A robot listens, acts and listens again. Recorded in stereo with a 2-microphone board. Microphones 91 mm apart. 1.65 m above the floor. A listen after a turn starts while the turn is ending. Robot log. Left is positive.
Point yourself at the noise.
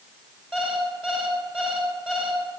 cmd yaw -30
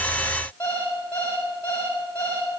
note: So it is at 20° left.
cmd yaw +20
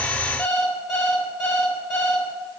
end: Facing the alarm clock, 2 to 4 m away.